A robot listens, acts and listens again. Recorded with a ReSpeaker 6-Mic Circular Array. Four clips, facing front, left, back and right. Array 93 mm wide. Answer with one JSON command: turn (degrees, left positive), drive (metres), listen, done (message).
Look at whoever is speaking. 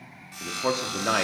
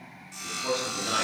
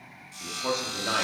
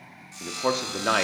{"turn": -65}
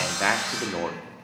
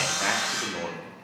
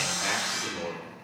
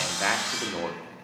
{"turn": -15}
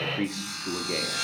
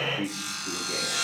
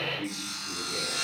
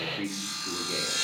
{"done": "Facing the man speaking, under 1 m away."}